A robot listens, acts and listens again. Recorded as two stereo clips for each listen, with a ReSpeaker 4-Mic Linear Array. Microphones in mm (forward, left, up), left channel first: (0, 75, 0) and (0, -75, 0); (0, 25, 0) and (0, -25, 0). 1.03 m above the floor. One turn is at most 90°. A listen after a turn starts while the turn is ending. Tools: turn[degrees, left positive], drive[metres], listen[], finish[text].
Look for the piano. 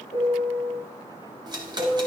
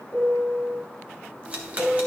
Thought: The piano: about 40° left or 140° left.
Action: turn[40]
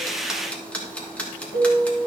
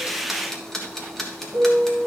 Thought: So it is at 95° left.
Action: turn[90]
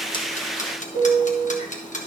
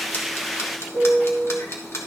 Thought: The piano is now 40° left.
Action: turn[40]
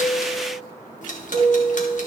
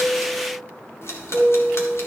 Action: finish[Facing the piano.]